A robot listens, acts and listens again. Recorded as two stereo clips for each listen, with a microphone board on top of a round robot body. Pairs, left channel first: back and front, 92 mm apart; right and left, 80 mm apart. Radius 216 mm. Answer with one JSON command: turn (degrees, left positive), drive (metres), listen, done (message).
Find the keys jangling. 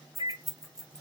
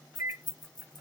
{"turn": -85}
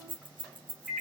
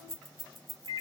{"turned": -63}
{"done": "Facing the keys jangling."}